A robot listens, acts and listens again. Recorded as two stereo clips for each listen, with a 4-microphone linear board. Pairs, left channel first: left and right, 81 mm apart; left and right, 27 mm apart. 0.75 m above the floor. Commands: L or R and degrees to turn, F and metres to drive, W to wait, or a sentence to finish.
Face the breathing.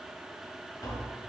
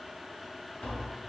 W
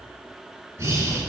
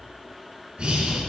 R35
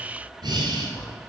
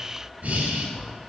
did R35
R105
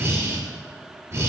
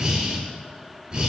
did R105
R40
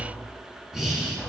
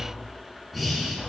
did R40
Found it: breathing, straight ahead, 1 to 2 m away.